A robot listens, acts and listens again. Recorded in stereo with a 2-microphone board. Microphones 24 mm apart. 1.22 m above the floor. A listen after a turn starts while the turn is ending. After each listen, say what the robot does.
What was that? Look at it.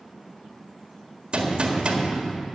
Turn 50° right.
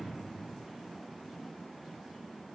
Keep listening.
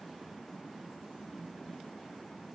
I heard a gunshot, but can't make it out now. It was about straight ahead or 80° right.